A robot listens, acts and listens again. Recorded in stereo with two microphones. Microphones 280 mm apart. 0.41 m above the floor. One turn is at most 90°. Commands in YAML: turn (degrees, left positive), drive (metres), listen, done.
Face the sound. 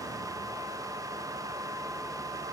listen: true
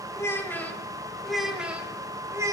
turn: -30
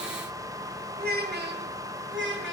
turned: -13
turn: -90
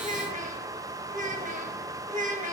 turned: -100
turn: -30
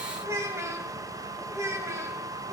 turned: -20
turn: -10
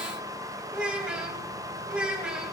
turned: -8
done: "Facing the child speaking, 2 to 4 m away."